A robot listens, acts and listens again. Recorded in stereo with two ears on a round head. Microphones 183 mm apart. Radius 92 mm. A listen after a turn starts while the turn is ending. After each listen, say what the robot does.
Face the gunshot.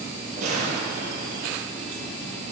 Turn 35° right.
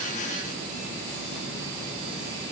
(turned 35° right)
Keep listening.
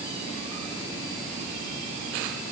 I heard a gunshot, but can't make it out now. It was about straight ahead or 110° right.